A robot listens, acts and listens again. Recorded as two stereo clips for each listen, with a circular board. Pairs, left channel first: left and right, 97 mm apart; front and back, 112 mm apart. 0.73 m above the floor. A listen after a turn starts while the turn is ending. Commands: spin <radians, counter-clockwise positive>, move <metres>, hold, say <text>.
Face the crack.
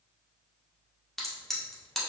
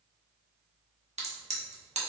spin 3.05
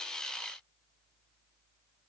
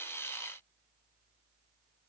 say Facing where the crack came from. I can't hear it now.